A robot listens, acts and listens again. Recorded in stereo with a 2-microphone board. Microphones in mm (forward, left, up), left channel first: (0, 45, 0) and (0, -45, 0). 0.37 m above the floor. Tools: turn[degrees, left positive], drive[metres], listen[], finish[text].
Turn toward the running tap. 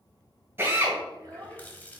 Thought: The running tap: about 20° left or 160° left.
Action: turn[20]
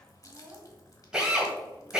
Thought: So it is at 135° left.
Action: turn[135]
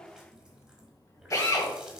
Thought: The running tap is now 10° right.
Action: turn[-10]
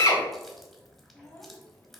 Action: finish[Facing the running tap, 1 to 2 m away.]